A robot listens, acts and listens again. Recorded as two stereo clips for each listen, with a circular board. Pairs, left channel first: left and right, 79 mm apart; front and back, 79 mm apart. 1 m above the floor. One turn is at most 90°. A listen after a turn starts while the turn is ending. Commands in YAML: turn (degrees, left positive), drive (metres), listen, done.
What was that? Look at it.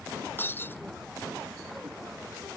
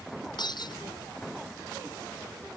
turn: 30
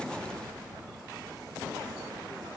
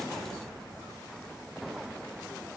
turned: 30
done: "Facing where the breaking glass came from. I can't hear it now."